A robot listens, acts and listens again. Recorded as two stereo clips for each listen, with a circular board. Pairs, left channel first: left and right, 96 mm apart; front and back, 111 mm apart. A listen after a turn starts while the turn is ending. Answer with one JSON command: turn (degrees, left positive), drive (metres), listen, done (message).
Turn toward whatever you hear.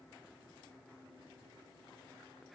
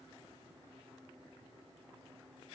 {"listen": true}
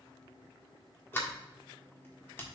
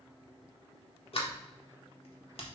{"turn": 25}
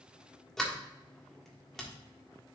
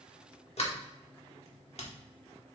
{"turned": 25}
{"done": "Found it: a sliding door, straight ahead, 1 to 2 m away."}